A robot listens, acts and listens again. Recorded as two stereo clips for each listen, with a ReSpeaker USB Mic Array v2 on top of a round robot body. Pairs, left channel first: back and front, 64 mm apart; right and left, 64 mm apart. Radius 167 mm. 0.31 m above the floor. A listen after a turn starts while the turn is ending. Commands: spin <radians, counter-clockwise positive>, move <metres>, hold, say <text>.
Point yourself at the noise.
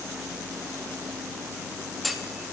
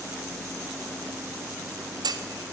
spin 1.57
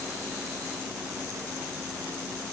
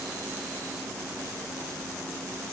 say I heard a clunk from this way, but can't make it out now.